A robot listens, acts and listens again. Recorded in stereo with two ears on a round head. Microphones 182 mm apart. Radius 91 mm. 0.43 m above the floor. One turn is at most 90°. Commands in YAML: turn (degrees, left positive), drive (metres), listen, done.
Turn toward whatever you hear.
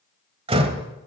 turn: -30
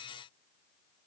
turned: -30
listen: true
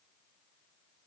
done: "I heard a door slam, but can't make it out now. It was about straight ahead or 120° right."